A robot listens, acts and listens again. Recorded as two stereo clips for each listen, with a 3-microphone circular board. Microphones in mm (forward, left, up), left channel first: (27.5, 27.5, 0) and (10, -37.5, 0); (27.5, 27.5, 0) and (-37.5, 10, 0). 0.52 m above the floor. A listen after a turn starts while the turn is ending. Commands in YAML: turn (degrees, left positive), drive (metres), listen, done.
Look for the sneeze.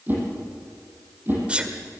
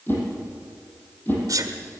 turn: -175
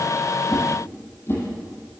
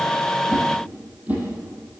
done: "I heard a sneeze from this way, but can't make it out now."